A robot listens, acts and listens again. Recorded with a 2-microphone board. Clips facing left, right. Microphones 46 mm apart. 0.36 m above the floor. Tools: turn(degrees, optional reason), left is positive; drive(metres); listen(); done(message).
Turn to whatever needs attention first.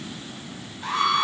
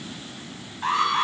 turn(degrees=-50, reason="The alarm: about 50° right or 130° right.")
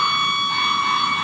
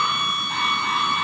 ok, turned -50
done("Found it: an alarm, straight ahead.")